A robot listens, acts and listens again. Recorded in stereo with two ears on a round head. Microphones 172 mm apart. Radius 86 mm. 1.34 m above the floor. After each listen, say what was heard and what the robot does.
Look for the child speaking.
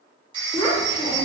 Turn 30° left.
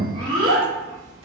So it is at 30° right. Turn 30° right.
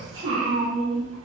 The child speaking is now 35° right. Turn 35° right.
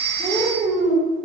The child speaking is now 35° right. Turn 35° right.
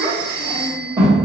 The child speaking is now 25° right. Turn 25° right.
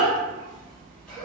Found it: a child speaking, straight ahead, 1 to 2 m away.